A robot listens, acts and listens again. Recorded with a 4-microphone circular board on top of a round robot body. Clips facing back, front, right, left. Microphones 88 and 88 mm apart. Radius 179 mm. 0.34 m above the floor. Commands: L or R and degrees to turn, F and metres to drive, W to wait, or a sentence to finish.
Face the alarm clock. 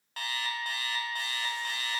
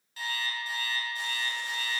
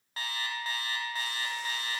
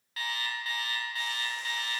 R150
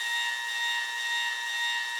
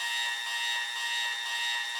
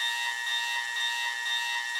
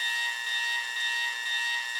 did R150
R25
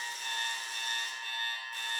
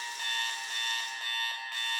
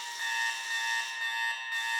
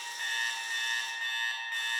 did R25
R10
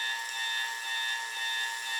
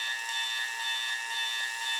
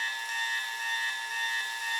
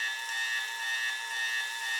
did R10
Found it: an alarm clock, straight ahead.